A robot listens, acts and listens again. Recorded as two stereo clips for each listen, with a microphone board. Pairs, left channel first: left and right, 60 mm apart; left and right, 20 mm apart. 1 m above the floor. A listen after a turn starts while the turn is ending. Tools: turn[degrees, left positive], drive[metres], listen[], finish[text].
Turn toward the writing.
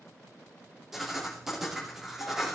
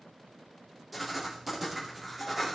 Action: turn[-30]
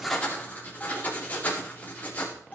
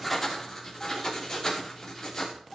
Thought: So it is at 25° left.
Action: turn[25]
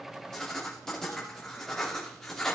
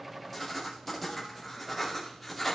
Action: finish[Facing the writing.]